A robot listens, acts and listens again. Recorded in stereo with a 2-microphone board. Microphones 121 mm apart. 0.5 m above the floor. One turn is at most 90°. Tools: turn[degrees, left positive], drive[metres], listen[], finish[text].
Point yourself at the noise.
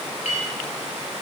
Thought: The clink: about 70° left or 110° left.
Action: turn[70]
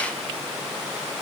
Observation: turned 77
Action: listen[]
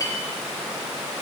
Thought: So it is at 30° left.
Action: turn[30]
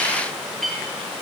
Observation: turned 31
Action: finish[Facing the clink.]